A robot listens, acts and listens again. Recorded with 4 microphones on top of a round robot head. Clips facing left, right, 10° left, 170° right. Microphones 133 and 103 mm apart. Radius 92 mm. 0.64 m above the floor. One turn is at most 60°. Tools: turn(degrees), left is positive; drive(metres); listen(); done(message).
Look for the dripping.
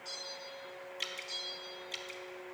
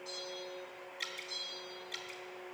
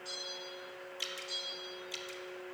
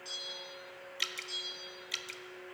turn(degrees=60)
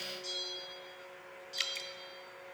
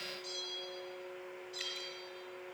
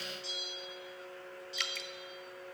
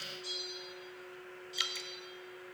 turn(degrees=60)
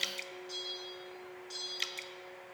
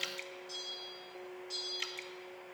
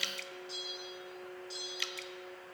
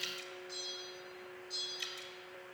turn(degrees=35)
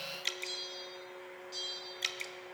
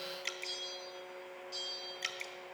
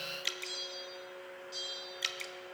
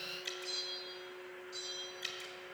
turn(degrees=25)
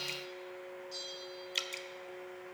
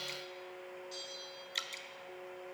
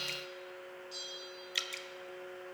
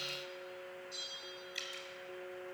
turn(degrees=10)
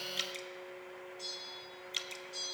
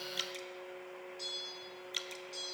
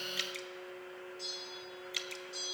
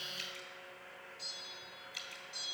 done("Facing the dripping, under 1 m away.")